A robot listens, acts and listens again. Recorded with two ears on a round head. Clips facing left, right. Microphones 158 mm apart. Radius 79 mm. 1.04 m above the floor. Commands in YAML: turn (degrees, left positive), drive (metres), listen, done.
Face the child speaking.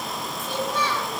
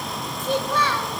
turn: -50
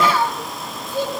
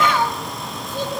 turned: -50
turn: 10
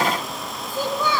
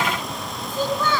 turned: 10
turn: 10
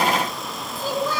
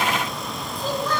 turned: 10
turn: 10
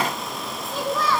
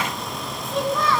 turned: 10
done: "Found it: a child speaking, straight ahead, 2 to 4 m away."